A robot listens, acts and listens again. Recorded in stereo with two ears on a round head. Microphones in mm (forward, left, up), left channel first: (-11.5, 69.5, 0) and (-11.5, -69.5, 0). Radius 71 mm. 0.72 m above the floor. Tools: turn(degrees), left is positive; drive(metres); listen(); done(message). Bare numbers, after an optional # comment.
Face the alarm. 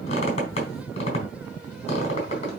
listen()
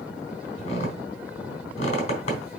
listen()
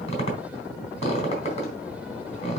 done("I can't make out an alarm, only a squeak.")